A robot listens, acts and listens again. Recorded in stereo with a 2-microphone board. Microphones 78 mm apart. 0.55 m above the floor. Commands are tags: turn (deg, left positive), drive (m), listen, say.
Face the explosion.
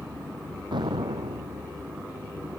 <turn deg="-90"/>
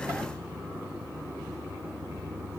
<say>I heard an explosion from this way, but can't make it out now.</say>